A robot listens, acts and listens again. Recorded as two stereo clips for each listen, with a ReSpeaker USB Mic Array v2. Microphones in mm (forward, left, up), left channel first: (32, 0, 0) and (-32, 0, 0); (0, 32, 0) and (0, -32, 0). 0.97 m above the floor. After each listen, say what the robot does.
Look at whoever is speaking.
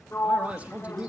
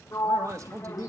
Turn 115° right.
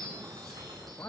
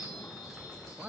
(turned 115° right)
Turn 25° right.
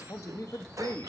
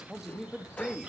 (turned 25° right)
Turn 10° right.
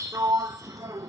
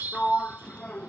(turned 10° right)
Keep listening.
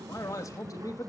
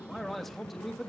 Facing the man speaking, 1 to 2 m away.